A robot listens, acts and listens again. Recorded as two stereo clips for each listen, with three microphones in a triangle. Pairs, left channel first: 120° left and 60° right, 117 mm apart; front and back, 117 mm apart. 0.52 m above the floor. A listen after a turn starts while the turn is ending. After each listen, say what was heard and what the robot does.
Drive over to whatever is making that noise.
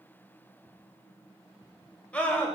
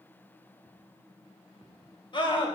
The scream: 40° left. Turn 40° left.
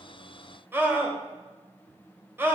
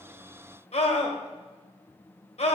The scream is now 10° left. Turn 10° left.
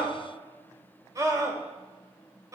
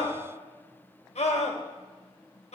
Drive 1.0 m forward.
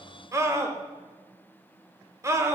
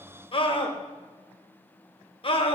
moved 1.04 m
Drive 1.0 m forward.
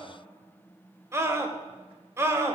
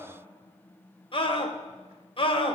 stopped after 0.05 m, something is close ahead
I am next to the scream.